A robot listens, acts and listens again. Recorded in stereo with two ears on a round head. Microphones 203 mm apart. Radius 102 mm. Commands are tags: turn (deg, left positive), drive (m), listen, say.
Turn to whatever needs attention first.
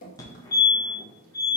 <turn deg="15"/>
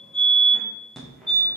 <say>Facing the fire alarm.</say>